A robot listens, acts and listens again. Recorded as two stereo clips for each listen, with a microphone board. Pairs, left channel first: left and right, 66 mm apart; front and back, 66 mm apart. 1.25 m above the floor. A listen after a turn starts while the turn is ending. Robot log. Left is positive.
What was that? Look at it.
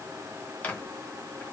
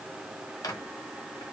note: The microwave: 20° left.
cmd yaw +20
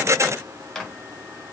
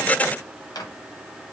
end: Facing the microwave, 1 to 2 m away.